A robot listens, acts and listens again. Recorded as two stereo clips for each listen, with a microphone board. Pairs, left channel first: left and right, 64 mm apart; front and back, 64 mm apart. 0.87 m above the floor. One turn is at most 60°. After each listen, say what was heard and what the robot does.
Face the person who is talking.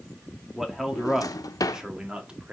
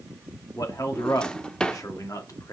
The man speaking: 20° right. Turn 20° right.
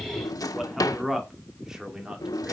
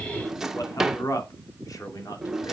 The man speaking is now 10° right. Turn 10° right.
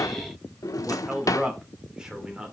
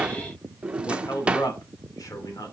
The man speaking is now 15° right. Turn 15° right.
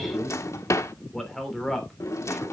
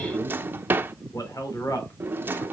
Facing the man speaking, 2 to 4 m away.